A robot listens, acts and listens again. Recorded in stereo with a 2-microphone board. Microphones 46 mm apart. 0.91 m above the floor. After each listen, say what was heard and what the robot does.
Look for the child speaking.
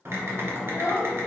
Turn 90° left.
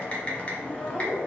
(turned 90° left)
Keep listening.
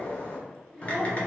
Found it: a child speaking, straight ahead.